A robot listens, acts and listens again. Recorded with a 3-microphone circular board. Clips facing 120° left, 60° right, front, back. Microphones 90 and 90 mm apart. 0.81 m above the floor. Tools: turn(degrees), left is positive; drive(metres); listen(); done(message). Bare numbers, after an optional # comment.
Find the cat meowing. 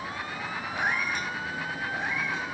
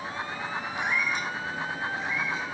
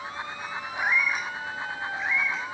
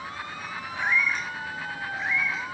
# The cat meowing: 95° left.
turn(95)
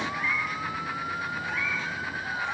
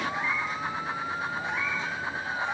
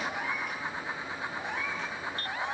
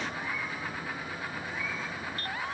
# The cat meowing is now 10° left.
turn(10)
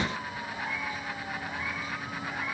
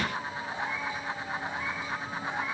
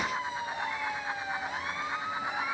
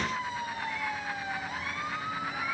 listen()
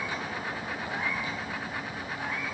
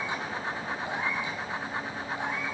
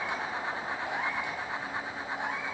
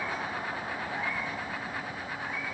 listen()
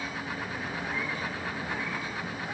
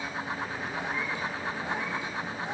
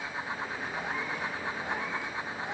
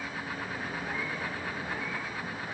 done("Facing where the cat meowing came from. I can't hear it now.")